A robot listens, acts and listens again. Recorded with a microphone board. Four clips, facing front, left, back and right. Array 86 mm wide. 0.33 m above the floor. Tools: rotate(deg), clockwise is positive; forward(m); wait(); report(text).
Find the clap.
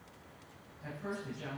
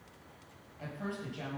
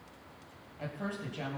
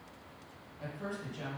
wait()
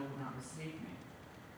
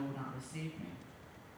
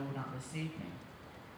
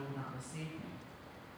wait()
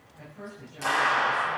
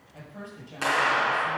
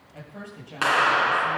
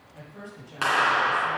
rotate(150)
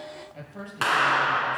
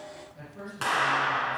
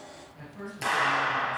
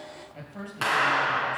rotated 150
rotate(10)
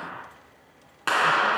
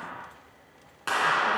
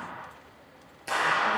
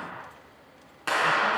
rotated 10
report("Facing the clap, 2 to 4 m away.")